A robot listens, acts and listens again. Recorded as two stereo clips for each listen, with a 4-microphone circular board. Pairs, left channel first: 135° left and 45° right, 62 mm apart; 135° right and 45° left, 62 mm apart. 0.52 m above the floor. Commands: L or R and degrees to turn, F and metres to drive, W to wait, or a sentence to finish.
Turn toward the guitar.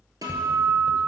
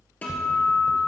R70
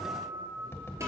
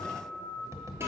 Found it: a guitar, straight ahead.